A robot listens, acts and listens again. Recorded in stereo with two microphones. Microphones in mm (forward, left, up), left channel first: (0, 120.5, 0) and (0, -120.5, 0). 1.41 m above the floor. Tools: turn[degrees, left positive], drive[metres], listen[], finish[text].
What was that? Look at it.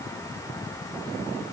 Action: listen[]
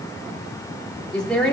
Action: turn[30]
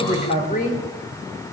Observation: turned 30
Thought: So it is at 145° left.
Action: turn[145]
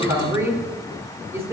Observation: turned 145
Thought: The woman speaking is now 10° right.
Action: turn[-10]
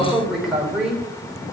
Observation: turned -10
Action: finish[Found it: a woman speaking, straight ahead.]